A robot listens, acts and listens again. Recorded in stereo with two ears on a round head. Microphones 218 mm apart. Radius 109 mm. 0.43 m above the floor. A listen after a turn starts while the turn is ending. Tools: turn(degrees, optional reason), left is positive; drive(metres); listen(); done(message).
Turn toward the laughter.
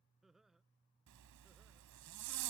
turn(degrees=30)
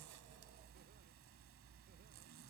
listen()
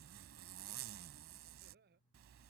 turn(degrees=-40, reason="So it is at 40° right.")
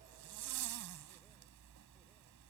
listen()
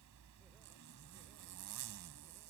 listen()
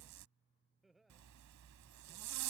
done("Facing the laughter.")